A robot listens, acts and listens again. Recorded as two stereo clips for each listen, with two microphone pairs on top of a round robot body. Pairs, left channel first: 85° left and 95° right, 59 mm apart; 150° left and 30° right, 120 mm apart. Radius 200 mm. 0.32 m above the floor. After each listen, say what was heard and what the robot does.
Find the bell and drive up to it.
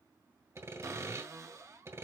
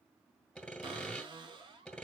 Keep listening.
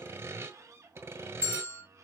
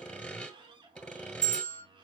The bell: 30° right. Turn 30° right.
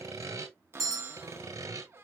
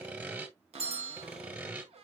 The bell is now 10° right. Turn 10° right.
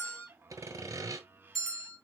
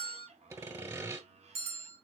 Drive 1.0 m forward.
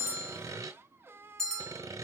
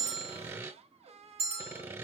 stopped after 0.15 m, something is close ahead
Blocked. The bell is further on, straight ahead.